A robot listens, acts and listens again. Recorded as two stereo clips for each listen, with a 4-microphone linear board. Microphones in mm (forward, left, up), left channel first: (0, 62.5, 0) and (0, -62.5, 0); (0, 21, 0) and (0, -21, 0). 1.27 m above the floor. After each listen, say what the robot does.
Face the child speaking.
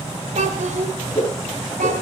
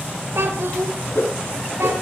Turn 75° right.
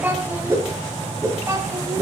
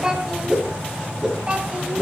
Turn 20° right.
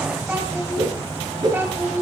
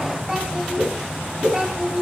Turn 15° right.
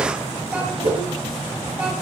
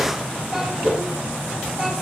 Keep listening.
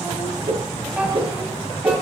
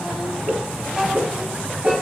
Keep listening.
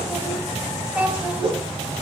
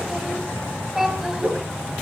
Turn 10° right.
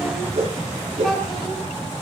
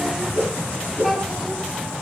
Keep listening.
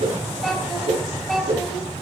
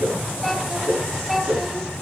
Facing the child speaking.